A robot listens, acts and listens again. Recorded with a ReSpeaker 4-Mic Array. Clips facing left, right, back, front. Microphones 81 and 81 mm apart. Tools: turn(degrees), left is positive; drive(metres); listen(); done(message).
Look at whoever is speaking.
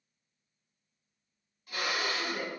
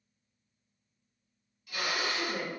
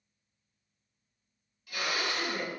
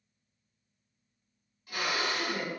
turn(degrees=-95)
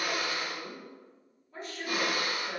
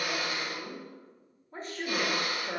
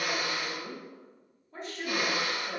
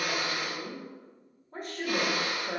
turn(degrees=-40)
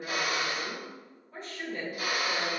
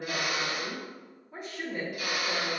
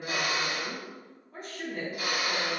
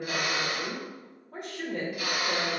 turn(degrees=-15)
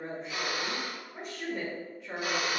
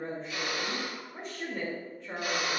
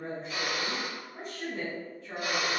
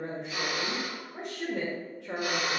done("Found it: a woman speaking, straight ahead.")